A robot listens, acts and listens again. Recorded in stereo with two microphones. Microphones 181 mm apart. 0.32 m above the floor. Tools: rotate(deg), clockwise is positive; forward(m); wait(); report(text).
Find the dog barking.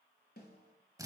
wait()
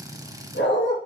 rotate(-75)
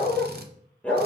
rotate(-10)
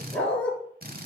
rotate(-10)
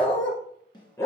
rotate(-15)
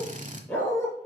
rotate(-10)
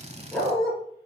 report("Found it: a dog barking, straight ahead, 2 to 4 m away.")